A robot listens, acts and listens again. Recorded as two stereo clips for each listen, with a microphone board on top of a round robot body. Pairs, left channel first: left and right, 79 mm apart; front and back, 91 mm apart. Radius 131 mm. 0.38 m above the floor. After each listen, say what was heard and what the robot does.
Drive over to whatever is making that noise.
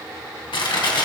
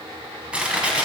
The crushing: 100° left. Turn 100° left.
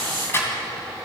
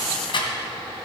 The crushing is now 30° left. Turn 30° left.
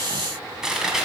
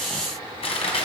Drive 1.0 m forward.
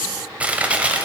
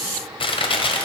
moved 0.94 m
The crushing is now 15° right. Turn 15° right.
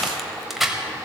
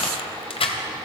Drive 1.0 m forward.
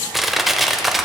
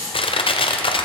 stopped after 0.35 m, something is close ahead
Arrived at the crushing, straight ahead.